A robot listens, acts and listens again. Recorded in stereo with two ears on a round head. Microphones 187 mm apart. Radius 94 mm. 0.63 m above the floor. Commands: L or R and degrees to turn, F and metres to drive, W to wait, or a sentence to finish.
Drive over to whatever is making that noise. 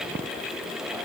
W
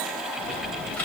L30
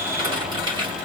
R25
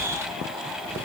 W
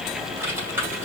R15
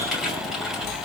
F1.0
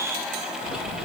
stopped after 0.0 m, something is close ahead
Something is in my way. I am facing the typing on a keyboard but have not reached it.